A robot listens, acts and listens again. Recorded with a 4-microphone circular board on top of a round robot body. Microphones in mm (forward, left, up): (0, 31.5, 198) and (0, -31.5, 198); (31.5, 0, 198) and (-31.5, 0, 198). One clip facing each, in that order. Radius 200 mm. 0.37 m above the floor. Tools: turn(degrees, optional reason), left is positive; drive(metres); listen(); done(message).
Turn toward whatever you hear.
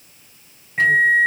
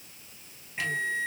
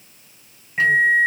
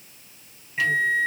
turn(degrees=55, reason="The microwave: 55° left.")
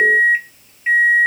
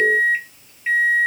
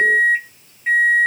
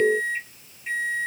turn(degrees=10, reason="The microwave is now 10° left.")
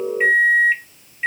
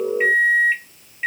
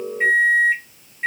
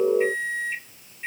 done("Facing the microwave.")